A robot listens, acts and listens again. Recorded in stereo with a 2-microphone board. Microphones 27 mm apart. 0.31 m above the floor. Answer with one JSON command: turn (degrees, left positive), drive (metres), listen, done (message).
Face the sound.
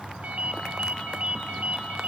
{"turn": -65}
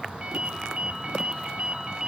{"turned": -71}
{"turn": -40}
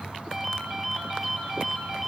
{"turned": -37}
{"done": "Facing the ringtone."}